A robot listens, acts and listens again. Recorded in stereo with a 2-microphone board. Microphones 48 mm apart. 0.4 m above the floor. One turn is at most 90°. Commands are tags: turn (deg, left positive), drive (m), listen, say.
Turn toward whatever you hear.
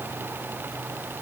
<listen/>
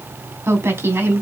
<turn deg="-70"/>
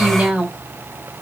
<turn deg="-20"/>
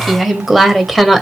<say>Facing the woman speaking.</say>